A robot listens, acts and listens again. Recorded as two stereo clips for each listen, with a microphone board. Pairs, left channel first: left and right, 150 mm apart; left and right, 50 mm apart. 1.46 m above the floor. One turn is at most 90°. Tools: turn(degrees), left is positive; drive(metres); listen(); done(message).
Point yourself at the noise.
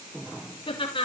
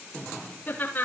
turn(degrees=35)
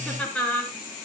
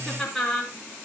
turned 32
done("Found it: laughter, straight ahead.")